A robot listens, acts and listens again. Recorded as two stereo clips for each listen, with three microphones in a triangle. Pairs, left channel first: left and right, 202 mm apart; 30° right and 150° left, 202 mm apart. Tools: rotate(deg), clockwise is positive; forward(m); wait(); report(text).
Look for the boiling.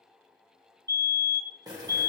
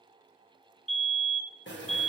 rotate(20)
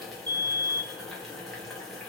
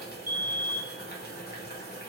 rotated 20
report("Facing the boiling, 1 to 2 m away.")